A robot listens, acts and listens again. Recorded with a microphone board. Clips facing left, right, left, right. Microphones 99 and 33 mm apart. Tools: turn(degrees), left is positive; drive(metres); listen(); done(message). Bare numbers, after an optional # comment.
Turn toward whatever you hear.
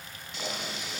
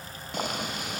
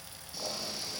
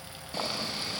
# The boiling: about 50° right or 130° right.
turn(-50)
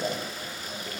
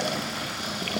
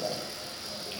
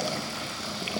# So it is at 75° right.
turn(-75)
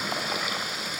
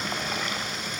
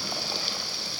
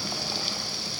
# The boiling is now 10° left.
turn(10)
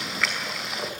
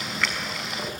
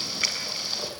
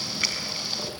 done("Facing the boiling, over 4 m away.")